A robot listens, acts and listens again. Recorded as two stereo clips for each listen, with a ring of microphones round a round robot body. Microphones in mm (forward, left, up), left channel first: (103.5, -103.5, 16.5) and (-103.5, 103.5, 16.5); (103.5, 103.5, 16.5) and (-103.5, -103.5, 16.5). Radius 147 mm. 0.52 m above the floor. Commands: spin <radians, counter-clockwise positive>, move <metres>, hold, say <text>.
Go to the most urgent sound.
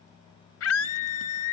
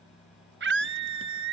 spin -1.48
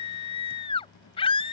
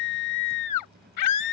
spin 0.44
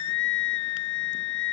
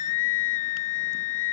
move 1.0
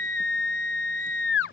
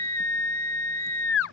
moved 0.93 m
move 1.0
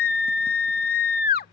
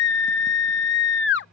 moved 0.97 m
move 1.0
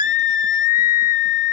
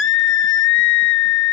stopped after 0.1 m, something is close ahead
spin 0.17
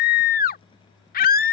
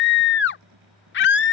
say I am next to the scream.